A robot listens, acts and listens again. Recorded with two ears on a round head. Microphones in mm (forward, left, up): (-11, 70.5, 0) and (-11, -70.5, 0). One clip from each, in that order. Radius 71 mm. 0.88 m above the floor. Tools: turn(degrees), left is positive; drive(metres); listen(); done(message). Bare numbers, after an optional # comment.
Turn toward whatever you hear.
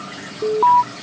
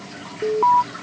turn(30)
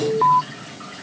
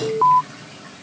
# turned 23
# So it is at 20° right.
turn(-20)
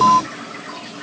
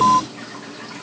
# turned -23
done("Found it: an alarm, straight ahead.")